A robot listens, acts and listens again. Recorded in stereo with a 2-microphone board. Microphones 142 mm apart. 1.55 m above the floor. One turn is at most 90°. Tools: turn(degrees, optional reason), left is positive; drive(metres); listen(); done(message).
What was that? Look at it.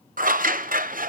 turn(degrees=-90)
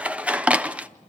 turn(degrees=-10, reason="So it is at 10° right.")
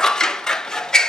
done("Facing the scissors.")